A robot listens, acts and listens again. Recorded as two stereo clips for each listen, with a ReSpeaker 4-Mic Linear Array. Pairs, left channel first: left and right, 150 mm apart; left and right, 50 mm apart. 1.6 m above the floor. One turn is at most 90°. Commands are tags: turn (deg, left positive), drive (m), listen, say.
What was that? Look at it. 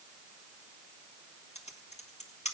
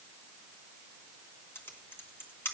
<turn deg="45"/>
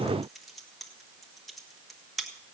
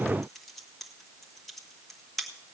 <say>Facing the typing on a keyboard, 1 to 2 m away.</say>